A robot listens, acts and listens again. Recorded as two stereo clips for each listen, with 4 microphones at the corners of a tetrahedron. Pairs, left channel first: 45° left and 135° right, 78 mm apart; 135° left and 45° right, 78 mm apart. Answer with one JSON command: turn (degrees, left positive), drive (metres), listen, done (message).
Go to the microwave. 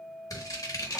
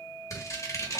{"listen": true}
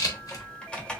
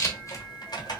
{"listen": true}
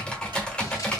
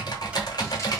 {"done": "I can't make out a microwave, only scissors and typing on a keyboard."}